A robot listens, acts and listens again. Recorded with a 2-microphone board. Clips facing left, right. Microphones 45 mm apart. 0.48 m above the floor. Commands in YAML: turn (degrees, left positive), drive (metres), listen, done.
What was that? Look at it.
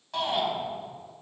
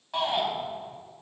turn: -30
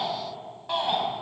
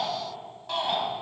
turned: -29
turn: 15
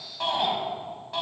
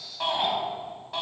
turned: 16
done: "Found it: a shout, straight ahead, over 4 m away."